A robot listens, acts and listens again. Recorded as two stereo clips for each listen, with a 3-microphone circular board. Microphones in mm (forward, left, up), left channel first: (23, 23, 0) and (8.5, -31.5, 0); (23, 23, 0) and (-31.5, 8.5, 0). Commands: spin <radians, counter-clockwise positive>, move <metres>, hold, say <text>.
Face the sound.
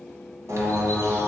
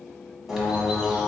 spin -1.40
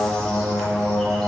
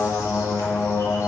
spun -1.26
say Found it: a bird, straight ahead, 1 to 2 m away.